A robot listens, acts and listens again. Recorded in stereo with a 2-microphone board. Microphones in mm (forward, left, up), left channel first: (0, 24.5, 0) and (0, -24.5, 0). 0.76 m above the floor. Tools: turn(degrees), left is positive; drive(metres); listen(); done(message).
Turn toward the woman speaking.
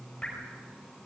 listen()
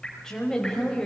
turn(degrees=30)
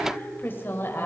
turn(degrees=130)
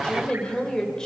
turn(degrees=15)
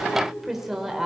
turn(degrees=-10)
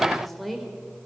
done("Found it: a woman speaking, straight ahead, 2 to 4 m away.")